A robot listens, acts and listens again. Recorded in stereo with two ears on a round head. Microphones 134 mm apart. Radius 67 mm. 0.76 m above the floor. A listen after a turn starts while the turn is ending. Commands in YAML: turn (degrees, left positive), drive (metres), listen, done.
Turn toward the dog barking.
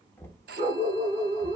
turn: -40
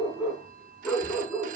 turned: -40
turn: 10
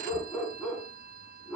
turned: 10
turn: 10
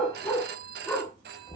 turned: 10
done: "Found it: a dog barking, straight ahead, 2 to 4 m away."